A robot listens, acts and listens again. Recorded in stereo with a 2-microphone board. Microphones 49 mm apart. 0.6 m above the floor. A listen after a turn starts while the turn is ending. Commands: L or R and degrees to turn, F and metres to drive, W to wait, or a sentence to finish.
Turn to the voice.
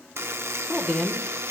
L30
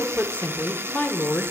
L130
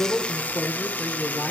L20
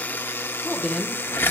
Found it: a woman speaking, straight ahead, 1 to 2 m away.